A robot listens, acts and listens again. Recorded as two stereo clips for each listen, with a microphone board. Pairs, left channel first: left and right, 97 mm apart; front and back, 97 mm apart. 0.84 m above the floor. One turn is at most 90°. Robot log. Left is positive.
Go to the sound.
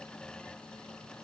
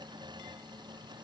cmd idle
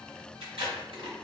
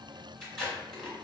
note: The tape being pulled: 85° right.
cmd yaw -85
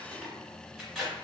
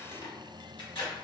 cmd fwd 1.0
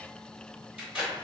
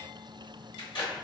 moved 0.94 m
note: The tape being pulled is now 10° right.
cmd yaw -10
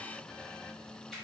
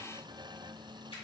cmd idle
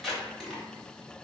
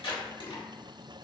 cmd fwd 1.0
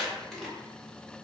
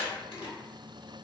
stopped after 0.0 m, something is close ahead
end: I am next to the tape being pulled.